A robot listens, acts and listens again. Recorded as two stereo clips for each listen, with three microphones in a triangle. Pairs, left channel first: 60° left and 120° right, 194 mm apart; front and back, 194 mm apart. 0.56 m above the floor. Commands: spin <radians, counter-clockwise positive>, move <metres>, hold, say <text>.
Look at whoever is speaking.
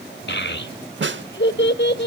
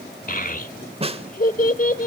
spin 0.70
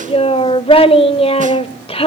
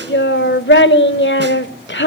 say Found it: a child speaking, straight ahead, 1 to 2 m away.